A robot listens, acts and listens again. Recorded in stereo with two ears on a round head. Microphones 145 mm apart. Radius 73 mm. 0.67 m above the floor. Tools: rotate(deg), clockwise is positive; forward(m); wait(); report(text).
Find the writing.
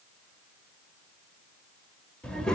wait()
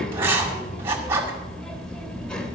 rotate(15)
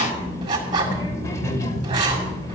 rotate(150)
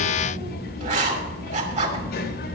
rotate(50)
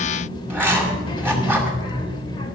rotate(15)
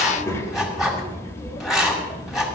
report("Found it: writing, straight ahead, 2 to 4 m away.")